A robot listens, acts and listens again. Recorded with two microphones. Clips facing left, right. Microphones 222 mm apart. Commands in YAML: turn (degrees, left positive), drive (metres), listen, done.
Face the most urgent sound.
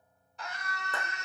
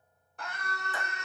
turn: -55
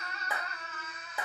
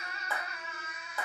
turn: -10
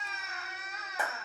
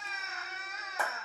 done: "Found it: a scream, straight ahead."